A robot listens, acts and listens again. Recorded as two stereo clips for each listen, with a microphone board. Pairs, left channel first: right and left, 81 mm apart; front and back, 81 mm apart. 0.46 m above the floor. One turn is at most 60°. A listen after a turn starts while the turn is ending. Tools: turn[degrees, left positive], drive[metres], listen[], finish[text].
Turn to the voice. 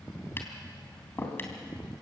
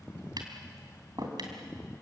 Action: listen[]
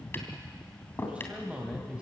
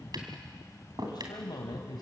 Thought: The man speaking: 15° left.
Action: turn[15]
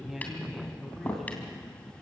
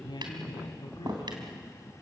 Action: finish[Found it: a man speaking, straight ahead.]